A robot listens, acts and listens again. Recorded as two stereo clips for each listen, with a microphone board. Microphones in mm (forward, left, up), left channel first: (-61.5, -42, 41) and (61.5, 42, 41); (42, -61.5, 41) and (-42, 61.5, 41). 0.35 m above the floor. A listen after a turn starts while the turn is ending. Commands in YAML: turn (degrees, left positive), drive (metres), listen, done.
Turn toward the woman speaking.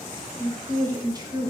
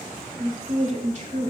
turn: 90
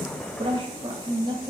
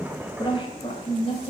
turn: -20
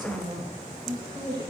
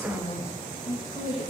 turn: -20
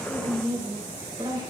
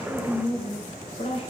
turn: -25
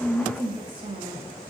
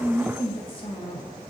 turn: -10
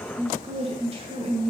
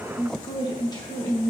done: "Facing the woman speaking."